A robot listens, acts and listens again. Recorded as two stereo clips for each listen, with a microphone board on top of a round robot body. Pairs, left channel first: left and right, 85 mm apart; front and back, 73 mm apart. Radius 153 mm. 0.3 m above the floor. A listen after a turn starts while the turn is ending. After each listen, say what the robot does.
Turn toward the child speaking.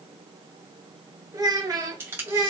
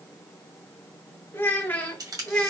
Turn 70° right.
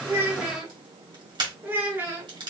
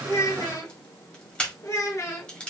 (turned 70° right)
Turn 35° right.
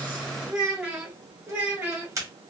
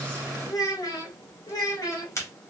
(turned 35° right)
Turn 25° right.
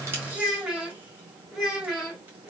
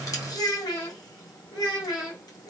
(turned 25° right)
Facing the child speaking, 1 to 2 m away.